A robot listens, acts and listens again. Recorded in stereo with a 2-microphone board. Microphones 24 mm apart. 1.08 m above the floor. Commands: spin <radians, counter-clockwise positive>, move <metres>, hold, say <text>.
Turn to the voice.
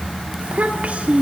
spin -1.57
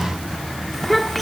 say Found it: a child speaking, straight ahead.